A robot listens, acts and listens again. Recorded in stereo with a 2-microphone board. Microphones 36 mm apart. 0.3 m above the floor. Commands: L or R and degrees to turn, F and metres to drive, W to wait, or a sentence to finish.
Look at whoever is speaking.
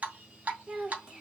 R25
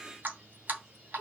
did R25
R130
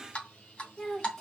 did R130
L10
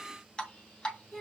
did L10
Facing the child speaking.